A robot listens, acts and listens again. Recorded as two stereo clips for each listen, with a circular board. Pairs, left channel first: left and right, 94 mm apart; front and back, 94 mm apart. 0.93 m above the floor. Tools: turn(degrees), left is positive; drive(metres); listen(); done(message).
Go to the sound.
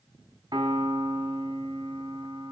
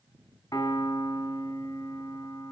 turn(degrees=-50)
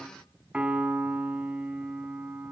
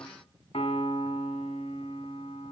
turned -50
turn(degrees=-10)
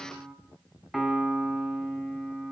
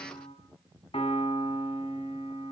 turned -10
drive(metres=1.0)
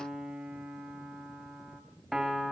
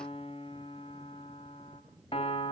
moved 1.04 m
drive(metres=1.0)
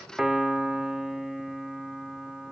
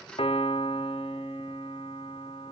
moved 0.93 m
drive(metres=1.0)
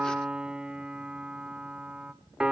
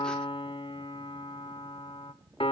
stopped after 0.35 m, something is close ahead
turn(degrees=-10)
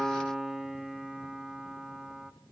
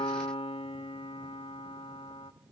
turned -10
done("Arrived at the piano, straight ahead.")